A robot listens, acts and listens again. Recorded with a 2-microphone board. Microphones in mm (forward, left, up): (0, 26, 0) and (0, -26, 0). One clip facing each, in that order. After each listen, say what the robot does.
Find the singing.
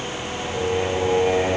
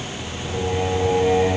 Turn 20° left.
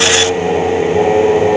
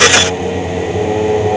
Turn 125° left.
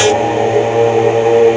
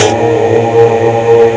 Turn 40° right.
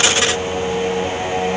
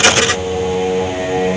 Turn 25° right.
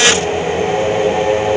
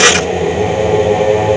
Turn 10° right.
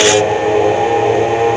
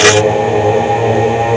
Facing the singing, 2 to 4 m away.